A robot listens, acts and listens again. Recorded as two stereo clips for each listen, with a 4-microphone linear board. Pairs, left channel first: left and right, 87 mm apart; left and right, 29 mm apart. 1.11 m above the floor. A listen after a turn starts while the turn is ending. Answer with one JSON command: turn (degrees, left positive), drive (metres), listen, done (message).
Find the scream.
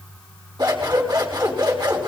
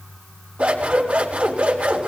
{"listen": true}
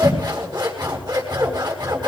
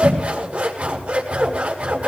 {"listen": true}
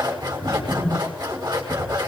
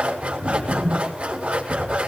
{"done": "I can't make out a scream to turn to."}